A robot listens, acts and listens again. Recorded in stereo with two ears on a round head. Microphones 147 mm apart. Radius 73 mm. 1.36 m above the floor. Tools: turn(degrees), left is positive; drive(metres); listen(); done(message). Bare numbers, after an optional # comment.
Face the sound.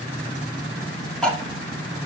turn(30)
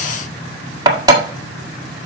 # So it is at 25° right.
turn(-25)
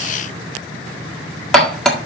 done("Found it: cutlery clinking, straight ahead, 1 to 2 m away.")